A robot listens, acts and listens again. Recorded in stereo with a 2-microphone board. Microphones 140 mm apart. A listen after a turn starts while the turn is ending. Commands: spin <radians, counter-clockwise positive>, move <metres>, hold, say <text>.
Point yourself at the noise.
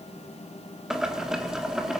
spin -0.52
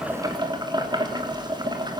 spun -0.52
spin -2.62
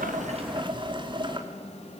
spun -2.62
spin -0.61
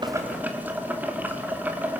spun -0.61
spin -0.26
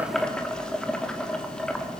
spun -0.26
say Found it: boiling, straight ahead, 2 to 4 m away.